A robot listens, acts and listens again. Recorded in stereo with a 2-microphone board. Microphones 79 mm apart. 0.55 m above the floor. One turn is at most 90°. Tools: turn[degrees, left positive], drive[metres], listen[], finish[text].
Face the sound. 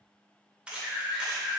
Action: turn[-30]
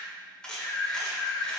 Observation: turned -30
Thought: So it is at 10° left.
Action: turn[10]
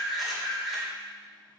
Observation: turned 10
Action: finish[Facing the camera shutter, 1 to 2 m away.]